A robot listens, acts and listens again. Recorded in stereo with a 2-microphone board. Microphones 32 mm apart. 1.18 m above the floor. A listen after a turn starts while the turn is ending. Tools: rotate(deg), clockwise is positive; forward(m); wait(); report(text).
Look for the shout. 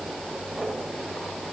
wait()
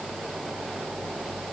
wait()
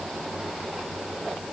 report("I can't make out a shout to turn to.")